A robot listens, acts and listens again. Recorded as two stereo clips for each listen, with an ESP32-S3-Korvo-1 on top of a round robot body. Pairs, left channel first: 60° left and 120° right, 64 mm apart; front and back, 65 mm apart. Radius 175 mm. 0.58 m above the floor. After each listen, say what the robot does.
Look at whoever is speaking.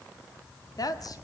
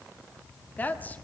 Turn 60° left.
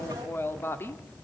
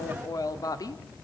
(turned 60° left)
Turn 10° left.
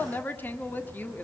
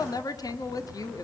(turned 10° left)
Facing the woman speaking.